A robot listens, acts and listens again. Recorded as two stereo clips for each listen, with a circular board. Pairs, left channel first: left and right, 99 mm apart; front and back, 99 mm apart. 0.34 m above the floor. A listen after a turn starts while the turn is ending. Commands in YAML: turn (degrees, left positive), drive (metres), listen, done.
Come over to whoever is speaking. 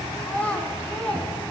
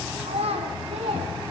turn: 165
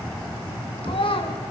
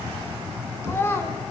turn: 65
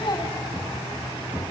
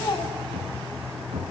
listen: true
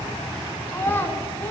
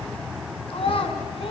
turn: 20
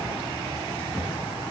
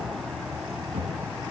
listen: true
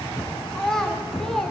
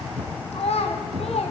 drive: 1.0
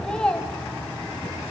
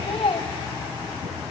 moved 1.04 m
turn: 10
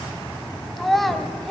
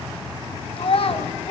drive: 1.0
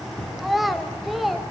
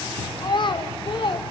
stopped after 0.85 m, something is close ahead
done: "Arrived at the child speaking, straight ahead."